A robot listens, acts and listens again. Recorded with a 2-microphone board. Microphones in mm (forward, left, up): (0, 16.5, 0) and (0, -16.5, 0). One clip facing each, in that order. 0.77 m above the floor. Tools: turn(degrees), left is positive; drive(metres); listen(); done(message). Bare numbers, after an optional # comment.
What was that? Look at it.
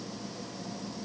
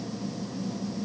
listen()
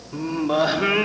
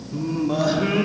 # The singing: about 35° left or 145° left.
turn(35)
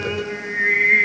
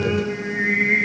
# So it is at 20° left.
turn(20)
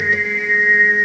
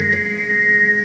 # The singing is now 10° left.
turn(10)
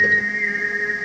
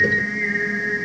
# The singing is now 10° left.
turn(10)
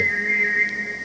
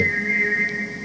done("Facing the singing.")